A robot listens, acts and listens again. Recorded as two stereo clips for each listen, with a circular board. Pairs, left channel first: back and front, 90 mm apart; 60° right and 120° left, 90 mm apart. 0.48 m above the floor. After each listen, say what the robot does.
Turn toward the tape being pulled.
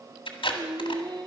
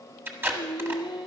Turn 175° right.
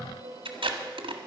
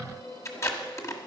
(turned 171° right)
Found it: tape being pulled, straight ahead.